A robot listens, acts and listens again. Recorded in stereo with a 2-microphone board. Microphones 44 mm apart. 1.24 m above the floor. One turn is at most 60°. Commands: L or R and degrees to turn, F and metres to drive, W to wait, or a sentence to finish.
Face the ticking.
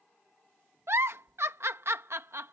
W
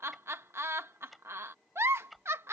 L30
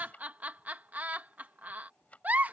L60
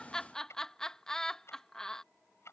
L60
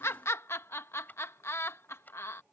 L40
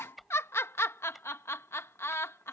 Facing the ticking.